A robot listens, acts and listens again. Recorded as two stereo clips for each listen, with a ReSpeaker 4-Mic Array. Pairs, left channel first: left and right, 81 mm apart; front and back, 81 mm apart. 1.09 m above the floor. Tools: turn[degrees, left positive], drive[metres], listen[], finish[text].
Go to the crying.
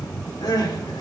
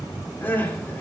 Thought: The crying: 65° left.
Action: turn[65]
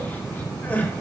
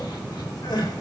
Thought: The crying is now 25° left.
Action: turn[25]
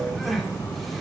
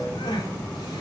Action: drive[1.0]
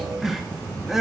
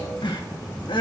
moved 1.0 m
Action: drive[1.0]
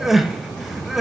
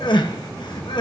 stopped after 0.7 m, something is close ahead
Action: finish[I am next to the crying.]